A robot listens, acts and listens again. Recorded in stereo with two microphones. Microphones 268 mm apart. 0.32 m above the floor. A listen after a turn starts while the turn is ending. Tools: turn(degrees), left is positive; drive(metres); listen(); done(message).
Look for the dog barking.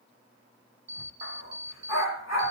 turn(degrees=65)
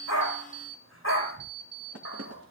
turn(degrees=55)
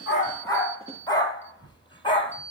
turn(degrees=20)
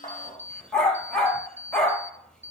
done("Found it: a dog barking, straight ahead.")